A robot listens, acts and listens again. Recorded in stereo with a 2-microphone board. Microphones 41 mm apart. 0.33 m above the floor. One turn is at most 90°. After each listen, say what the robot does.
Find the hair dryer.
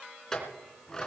Keep listening.
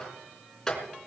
Keep listening.
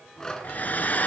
Turn 45° left.
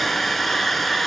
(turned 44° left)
Facing the hair dryer, 1 to 2 m away.